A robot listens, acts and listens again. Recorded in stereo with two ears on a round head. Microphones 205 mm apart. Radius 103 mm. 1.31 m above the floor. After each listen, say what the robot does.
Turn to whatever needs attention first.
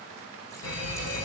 Turn 65° left.
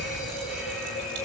Found it: a fire alarm, straight ahead, over 4 m away.